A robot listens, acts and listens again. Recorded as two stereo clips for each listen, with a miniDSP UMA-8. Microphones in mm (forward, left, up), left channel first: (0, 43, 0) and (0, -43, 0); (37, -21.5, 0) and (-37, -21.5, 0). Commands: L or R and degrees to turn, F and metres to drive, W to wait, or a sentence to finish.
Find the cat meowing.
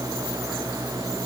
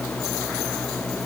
W
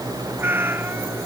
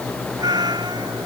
R155
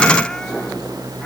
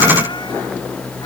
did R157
W
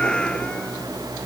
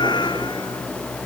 L10
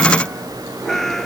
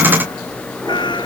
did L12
Facing the cat meowing.